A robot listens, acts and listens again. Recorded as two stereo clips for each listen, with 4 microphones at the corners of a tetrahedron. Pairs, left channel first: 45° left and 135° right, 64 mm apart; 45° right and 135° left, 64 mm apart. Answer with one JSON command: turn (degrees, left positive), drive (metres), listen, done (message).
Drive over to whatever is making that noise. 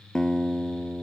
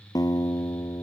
{"turn": -35}
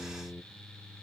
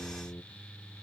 {"drive": 1.0}
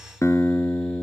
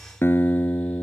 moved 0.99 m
{"drive": 1.0}
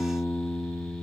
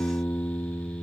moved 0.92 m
{"drive": 1.0}
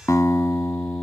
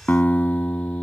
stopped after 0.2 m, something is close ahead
{"turn": 15}
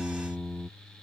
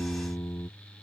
{"done": "I am next to the guitar."}